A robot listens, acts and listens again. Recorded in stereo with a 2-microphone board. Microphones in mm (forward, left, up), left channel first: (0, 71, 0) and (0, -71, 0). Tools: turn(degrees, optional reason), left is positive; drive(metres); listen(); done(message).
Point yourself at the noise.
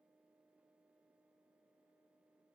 listen()
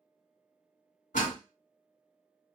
turn(degrees=65, reason="The door slam: about 65° left or 115° left.")
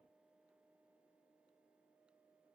listen()
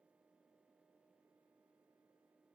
done("I heard a door slam, but can't make it out now. It was about straight ahead or 50° left.")